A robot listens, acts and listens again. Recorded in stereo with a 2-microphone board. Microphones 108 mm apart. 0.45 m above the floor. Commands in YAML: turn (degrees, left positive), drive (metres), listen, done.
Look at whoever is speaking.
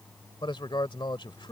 turn: 50
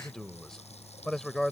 done: "Facing the man speaking."